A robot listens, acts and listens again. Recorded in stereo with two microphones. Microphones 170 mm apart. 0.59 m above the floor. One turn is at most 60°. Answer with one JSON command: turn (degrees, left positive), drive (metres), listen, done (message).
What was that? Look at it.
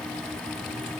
{"listen": true}
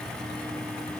{"listen": true}
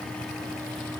{"done": "I can't make out anything."}